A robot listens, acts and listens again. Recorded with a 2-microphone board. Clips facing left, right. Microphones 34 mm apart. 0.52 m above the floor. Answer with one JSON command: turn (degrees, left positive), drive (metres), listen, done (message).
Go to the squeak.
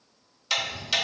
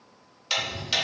{"listen": true}
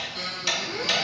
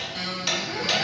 {"turn": -70}
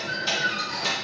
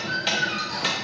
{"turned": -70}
{"turn": -35}
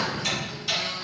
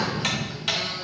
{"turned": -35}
{"listen": true}
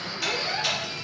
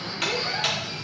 {"drive": 1.0}
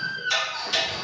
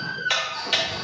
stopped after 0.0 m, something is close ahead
{"done": "Something is in my way. I am facing the squeak but have not reached it."}